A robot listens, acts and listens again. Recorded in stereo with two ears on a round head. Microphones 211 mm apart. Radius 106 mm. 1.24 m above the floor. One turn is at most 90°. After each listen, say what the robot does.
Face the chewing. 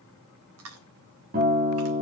Turn 65° right.
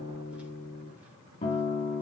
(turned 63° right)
Keep listening.
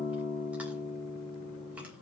Keep listening.
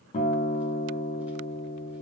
I heard chewing, but can't make it out now. It was about 5° right or 50° right.